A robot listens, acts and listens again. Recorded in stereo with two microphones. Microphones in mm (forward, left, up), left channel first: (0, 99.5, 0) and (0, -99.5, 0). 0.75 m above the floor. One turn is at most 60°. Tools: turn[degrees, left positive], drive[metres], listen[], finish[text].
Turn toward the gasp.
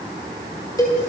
Action: listen[]
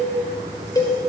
Action: listen[]
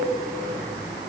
Action: finish[I can't make out a gasp to turn to.]